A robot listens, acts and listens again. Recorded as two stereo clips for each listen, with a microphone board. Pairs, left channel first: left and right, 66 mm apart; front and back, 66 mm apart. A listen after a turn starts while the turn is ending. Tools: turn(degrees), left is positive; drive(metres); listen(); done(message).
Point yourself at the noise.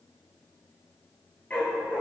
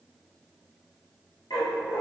turn(degrees=15)
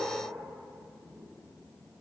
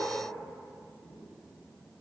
listen()
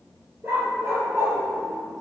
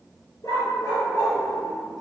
turn(degrees=-40)
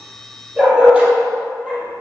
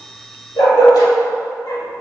turn(degrees=-15)
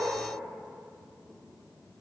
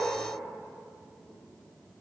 listen()
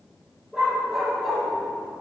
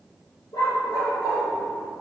done("Facing the dog barking, 2 to 4 m away.")